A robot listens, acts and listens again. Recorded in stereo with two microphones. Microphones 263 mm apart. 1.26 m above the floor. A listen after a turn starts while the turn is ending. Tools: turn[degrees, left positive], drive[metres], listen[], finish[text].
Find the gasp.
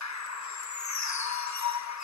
Action: listen[]
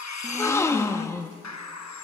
Action: turn[30]
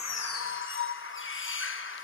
Action: listen[]
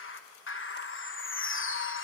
Action: finish[I heard a gasp, but can't make it out now. It was about 20° right or 140° left.]